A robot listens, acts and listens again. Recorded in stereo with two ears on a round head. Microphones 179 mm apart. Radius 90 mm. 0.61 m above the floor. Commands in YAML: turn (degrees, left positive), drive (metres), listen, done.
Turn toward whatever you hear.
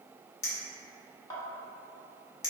turn: 20
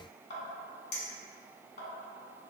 turn: 135
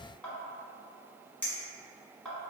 turn: 10
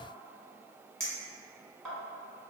done: "Found it: a clink, straight ahead."